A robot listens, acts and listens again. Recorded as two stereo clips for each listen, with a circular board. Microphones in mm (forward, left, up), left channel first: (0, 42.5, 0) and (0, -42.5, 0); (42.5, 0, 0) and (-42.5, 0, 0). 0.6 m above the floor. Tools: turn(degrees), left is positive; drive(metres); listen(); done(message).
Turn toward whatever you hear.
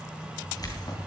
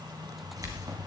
turn(degrees=135)
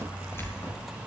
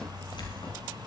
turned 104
turn(degrees=30)
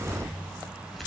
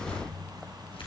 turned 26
done("Found it: keys jangling, straight ahead.")